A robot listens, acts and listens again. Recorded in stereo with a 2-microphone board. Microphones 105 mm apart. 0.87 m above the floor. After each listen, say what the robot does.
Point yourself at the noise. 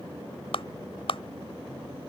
Turn 60° left.
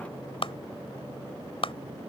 Turn 60° left.
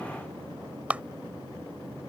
Turn 15° right.
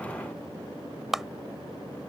Found it: a clap, straight ahead.